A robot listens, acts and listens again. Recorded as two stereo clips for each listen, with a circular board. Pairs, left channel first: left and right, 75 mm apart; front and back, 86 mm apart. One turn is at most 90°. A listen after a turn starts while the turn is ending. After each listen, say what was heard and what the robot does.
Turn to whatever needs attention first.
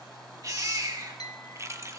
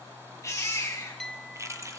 The baby crying: 55° right. Turn 55° right.
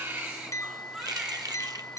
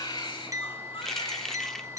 The baby crying is now 10° right. Turn 10° right.
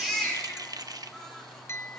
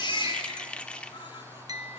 Facing the baby crying, over 4 m away.